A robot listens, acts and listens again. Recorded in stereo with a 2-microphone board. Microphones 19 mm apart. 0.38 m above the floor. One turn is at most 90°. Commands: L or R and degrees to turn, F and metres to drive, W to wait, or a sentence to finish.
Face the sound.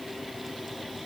W
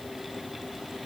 W
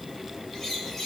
L30
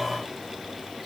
W
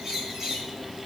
R30
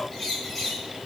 Found it: a bird, straight ahead.